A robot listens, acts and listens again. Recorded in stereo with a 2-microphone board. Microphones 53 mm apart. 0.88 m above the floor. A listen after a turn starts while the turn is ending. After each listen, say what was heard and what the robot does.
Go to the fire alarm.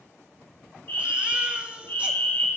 The fire alarm: about 40° left or 140° left. Turn 40° left.
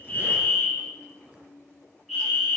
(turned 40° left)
Drive 1.0 m forward.
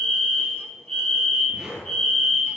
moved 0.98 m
Drive 1.0 m forward.
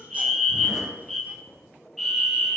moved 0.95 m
Drive 1.0 m forward.
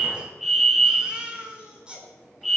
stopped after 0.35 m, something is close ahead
I am next to the fire alarm.